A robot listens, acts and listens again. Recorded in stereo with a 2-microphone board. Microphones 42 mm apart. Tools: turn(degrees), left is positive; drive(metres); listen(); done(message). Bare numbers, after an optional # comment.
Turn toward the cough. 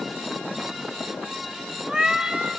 listen()
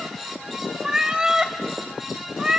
listen()
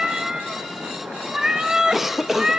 turn(-30)
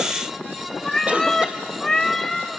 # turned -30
listen()
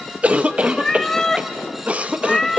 # So it is at 135° right.
turn(-135)
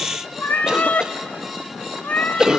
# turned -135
# The cough is now 20° right.
turn(-20)
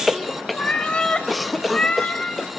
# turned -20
done("Found it: a cough, straight ahead, under 1 m away.")